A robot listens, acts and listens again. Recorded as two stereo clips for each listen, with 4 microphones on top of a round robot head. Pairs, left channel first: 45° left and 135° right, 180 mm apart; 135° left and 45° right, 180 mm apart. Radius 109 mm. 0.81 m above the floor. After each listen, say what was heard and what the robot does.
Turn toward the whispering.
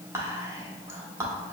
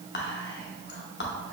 The whispering: 150° left. Turn 150° left.
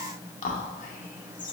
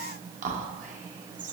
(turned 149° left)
Found it: whispering, straight ahead.